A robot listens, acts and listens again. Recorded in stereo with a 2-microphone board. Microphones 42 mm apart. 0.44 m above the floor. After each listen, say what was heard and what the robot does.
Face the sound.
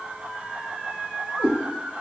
The cat meowing: about 50° right or 130° right. Turn 50° right.
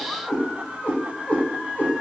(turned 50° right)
So it is at 45° left. Turn 45° left.
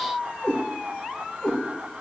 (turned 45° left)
The cat meowing is now 45° left. Turn 45° left.
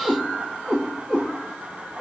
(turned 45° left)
Found it: a cat meowing, straight ahead, 1 to 2 m away.